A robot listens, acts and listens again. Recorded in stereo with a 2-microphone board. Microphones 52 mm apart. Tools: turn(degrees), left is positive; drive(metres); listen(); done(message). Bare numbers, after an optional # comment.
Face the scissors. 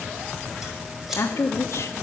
turn(-30)
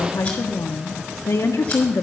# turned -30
listen()
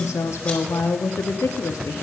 listen()
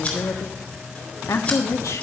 # So it is at 20° left.
turn(20)
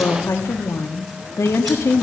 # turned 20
listen()
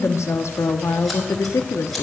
listen()
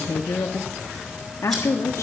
done("Facing where the scissors came from. I can't hear it now.")